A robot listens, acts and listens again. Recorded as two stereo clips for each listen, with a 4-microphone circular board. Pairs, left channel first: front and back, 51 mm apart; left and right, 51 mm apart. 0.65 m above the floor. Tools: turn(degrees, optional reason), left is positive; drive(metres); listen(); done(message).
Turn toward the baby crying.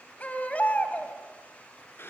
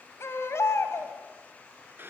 turn(degrees=60, reason="The baby crying: 60° left.")
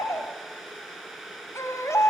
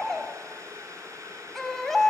done("Facing the baby crying.")